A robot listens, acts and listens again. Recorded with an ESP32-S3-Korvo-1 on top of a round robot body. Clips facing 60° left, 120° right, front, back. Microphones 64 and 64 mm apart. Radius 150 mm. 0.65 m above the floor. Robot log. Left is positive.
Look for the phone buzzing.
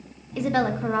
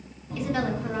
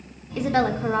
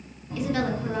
note: The phone buzzing: 120° right.
cmd yaw -120
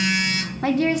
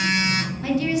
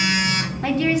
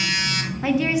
note: The phone buzzing is now 65° right.
cmd yaw -65
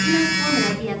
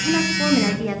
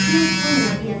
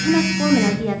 note: The phone buzzing is now 10° left.
cmd yaw +10
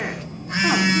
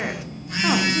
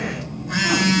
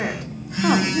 end: Found it: a phone buzzing, straight ahead, under 1 m away.